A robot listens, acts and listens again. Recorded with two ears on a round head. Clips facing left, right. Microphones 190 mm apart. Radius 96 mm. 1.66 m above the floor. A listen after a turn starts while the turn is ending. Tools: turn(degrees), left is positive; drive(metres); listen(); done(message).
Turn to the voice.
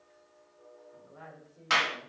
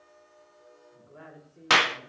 turn(degrees=-30)
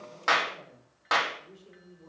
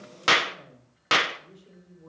done("Facing the woman speaking, over 4 m away.")